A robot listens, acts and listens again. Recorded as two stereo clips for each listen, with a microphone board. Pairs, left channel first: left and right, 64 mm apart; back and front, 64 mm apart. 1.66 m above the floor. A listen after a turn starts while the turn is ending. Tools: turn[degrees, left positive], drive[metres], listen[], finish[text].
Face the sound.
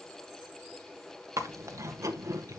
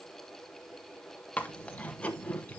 Thought: The chewing: 115° right.
Action: turn[-115]
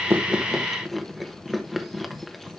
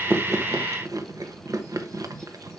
Action: finish[Facing the chewing, 1 to 2 m away.]